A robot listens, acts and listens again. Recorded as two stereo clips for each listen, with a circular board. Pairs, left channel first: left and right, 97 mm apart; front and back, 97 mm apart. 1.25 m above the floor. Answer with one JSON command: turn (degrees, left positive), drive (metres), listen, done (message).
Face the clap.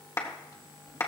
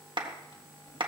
{"turn": 150}
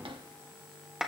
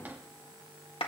{"turn": -10}
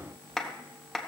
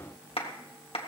{"done": "Found it: a clap, straight ahead."}